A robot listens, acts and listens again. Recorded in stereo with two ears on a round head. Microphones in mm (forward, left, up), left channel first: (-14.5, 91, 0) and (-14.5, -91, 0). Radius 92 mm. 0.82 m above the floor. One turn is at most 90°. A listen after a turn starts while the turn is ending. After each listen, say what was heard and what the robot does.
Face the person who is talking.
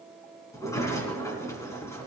Keep listening.
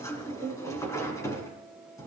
Keep listening.
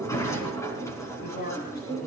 The man speaking: about 55° left or 125° left. Turn 55° left.
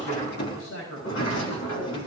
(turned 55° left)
So it is at 70° left. Turn 70° left.
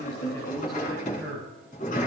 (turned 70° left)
Facing the man speaking, over 4 m away.